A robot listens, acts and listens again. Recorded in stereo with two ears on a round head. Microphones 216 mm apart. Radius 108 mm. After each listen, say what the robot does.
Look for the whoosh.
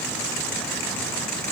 Keep listening.
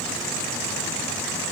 Keep listening.
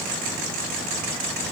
I can't make out a whoosh.